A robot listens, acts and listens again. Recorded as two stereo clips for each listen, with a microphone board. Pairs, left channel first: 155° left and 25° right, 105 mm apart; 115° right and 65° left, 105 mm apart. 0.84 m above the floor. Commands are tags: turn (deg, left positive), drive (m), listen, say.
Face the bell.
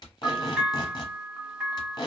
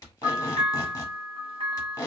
<turn deg="60"/>
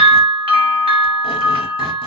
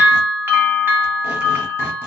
<say>Found it: a bell, straight ahead.</say>